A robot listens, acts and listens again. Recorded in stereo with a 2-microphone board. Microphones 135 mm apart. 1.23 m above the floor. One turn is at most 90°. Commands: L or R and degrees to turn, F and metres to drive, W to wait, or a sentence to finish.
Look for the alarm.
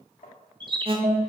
R40
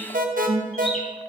R90
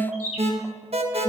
R50
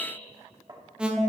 Facing the alarm, 1 to 2 m away.